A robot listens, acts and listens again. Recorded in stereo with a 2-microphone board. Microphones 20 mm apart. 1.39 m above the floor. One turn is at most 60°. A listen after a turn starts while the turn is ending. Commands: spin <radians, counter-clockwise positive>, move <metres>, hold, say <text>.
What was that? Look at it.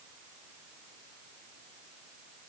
hold
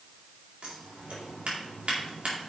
spin -1.05
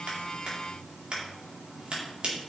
spin -0.87
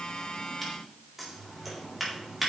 say Found it: scissors, straight ahead, 2 to 4 m away.